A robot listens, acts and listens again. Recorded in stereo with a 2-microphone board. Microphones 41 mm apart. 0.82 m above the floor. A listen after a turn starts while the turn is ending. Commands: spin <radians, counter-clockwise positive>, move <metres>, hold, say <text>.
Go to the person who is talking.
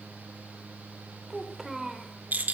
spin -0.52
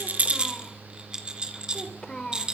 spin 0.35
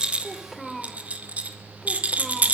move 1.0
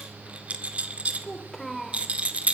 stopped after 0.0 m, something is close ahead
say Blocked. The child speaking is further on, straight ahead.